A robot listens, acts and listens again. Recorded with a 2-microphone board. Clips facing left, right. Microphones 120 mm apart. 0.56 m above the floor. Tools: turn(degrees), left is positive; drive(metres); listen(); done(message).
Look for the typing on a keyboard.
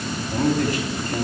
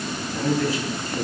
listen()
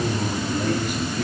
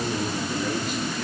listen()
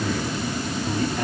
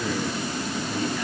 done("I can't make out typing on a keyboard, only a man speaking.")